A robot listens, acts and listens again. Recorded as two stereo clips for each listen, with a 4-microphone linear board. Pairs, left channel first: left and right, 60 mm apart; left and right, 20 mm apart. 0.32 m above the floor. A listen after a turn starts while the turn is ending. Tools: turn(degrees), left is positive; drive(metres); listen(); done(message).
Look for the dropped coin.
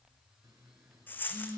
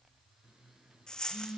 turn(degrees=35)
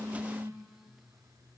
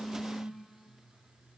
listen()
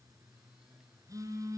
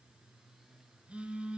done("I heard a dropped coin, but can't make it out now. It was about straight ahead or 110° left.")